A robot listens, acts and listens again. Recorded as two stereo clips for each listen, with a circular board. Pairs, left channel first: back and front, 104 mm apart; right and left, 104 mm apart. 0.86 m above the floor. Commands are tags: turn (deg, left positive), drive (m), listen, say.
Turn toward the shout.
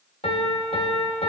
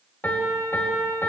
<listen/>
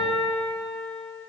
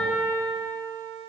<listen/>
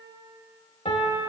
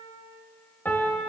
<say>I can't make out a shout, only a piano.</say>